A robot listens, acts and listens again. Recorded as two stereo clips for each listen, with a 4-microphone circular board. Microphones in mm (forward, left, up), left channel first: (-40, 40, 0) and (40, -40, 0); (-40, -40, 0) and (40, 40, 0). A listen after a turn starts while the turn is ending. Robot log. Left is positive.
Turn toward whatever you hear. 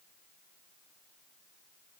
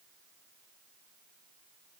cmd idle
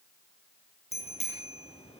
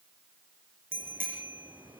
note: The bicycle bell: 115° left.
cmd yaw +115
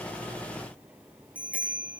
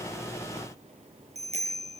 note: The bicycle bell is now 30° left.
cmd yaw +30
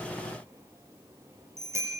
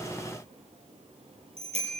note: The bicycle bell is now 20° left.
cmd yaw +20
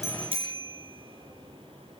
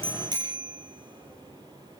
end: Found it: a bicycle bell, straight ahead, over 4 m away.